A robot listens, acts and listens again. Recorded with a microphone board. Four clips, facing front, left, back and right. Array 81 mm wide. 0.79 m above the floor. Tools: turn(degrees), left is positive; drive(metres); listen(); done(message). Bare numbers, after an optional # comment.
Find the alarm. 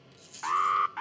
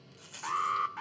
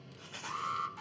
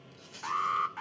done("Facing the alarm.")